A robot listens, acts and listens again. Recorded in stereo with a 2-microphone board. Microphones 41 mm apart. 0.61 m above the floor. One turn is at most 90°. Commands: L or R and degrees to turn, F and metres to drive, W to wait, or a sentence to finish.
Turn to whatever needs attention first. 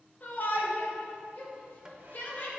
L45
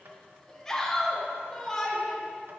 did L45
L15
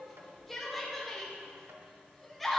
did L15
Facing the shout.